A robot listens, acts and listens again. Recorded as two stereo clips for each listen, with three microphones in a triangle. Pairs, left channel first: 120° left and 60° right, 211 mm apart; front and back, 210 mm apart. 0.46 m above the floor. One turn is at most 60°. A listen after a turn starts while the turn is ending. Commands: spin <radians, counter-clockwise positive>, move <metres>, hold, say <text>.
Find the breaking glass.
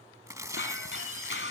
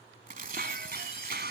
spin 1.05
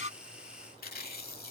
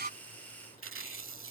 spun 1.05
spin 1.05
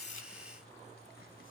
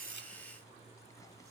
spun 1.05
spin 0.35
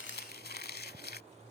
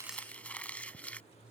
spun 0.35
say Facing where the breaking glass came from. I can't hear it now.